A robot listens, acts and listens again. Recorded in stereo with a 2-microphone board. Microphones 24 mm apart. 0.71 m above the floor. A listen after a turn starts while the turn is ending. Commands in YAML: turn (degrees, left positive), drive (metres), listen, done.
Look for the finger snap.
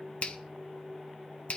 turn: 50
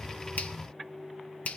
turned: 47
turn: 80
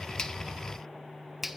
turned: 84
done: "Found it: a finger snap, straight ahead, under 1 m away."